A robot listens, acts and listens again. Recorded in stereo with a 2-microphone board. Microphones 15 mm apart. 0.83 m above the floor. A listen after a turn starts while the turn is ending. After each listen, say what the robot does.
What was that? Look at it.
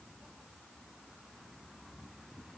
Keep listening.
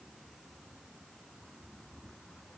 Keep listening.
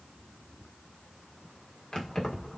Turn 70° left.
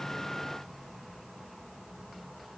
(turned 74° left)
Found it: keys jangling, straight ahead.